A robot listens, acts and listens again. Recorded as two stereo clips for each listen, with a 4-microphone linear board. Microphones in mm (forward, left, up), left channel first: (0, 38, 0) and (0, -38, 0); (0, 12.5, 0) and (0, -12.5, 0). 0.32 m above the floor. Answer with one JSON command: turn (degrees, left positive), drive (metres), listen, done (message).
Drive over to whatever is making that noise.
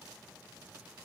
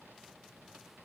{"listen": true}
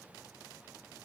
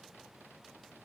{"listen": true}
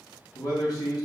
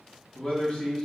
{"turn": 60}
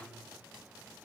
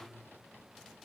{"listen": true}
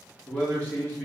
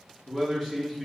{"turn": 25}
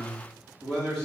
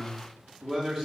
{"turn": 10}
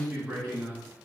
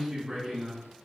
{"drive": 1.0}
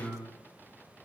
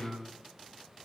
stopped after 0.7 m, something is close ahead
{"done": "Arrived at the man speaking, straight ahead."}